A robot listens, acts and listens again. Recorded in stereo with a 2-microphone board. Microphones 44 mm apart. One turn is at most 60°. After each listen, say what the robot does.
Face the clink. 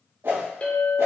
Turn 30° left.
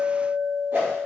Found it: a clink, straight ahead, 1 to 2 m away.